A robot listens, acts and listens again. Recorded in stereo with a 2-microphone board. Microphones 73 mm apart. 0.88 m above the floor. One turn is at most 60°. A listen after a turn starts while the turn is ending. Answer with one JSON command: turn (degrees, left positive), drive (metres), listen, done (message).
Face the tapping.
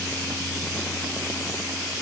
{"listen": true}
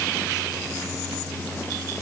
{"listen": true}
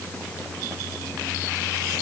{"done": "I can't make out tapping to turn to."}